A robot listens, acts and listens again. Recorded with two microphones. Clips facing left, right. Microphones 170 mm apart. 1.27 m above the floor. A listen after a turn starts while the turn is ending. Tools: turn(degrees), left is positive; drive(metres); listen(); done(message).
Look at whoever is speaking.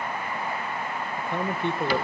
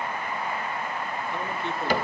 turn(degrees=55)
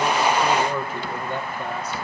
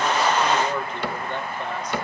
turn(degrees=10)
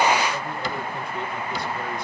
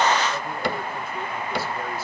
listen()
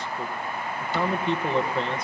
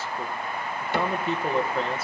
done("Facing the man speaking, 1 to 2 m away.")